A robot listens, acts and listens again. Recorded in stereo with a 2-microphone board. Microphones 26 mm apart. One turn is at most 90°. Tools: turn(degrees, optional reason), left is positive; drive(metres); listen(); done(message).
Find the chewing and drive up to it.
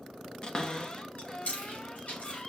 turn(degrees=70, reason="The chewing: about 70° left or 110° left.")
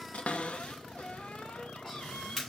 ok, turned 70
drive(metres=1.0)
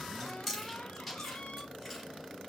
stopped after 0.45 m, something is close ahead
done("Something is in my way. I am facing the chewing but have not reached it.")